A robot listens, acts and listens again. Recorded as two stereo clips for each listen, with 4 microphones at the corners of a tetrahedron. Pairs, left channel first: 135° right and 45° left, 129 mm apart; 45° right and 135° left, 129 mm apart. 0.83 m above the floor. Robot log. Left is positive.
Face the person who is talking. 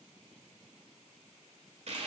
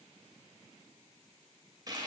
cmd idle
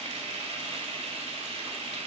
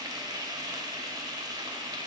cmd idle
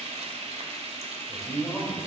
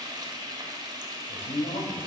note: The man speaking: 50° right.
cmd yaw -50
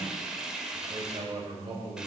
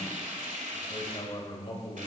end: Found it: a man speaking, straight ahead, 2 to 4 m away.